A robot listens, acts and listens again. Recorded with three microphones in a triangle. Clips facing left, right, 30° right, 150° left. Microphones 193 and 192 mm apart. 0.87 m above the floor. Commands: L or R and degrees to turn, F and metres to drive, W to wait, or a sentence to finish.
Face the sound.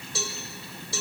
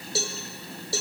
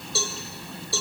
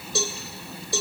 R135
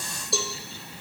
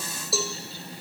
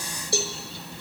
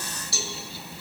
Facing the cowbell, 1 to 2 m away.